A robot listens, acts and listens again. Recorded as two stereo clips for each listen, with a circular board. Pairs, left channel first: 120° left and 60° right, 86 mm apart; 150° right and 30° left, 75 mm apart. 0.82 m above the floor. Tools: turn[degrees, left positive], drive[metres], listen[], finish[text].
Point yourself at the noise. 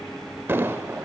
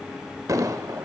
Action: finish[Facing the explosion.]